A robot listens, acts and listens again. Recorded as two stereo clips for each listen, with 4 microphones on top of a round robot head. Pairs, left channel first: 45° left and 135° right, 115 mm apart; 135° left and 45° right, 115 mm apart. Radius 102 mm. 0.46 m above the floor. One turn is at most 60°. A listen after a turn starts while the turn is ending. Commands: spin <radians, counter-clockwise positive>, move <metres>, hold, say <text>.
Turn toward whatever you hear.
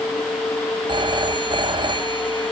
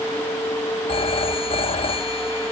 spin 1.05
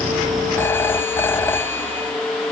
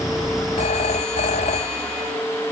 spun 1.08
spin 1.05
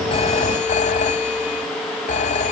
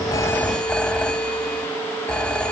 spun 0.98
spin 0.96
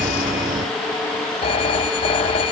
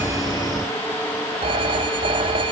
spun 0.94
say Found it: a phone ringing, straight ahead.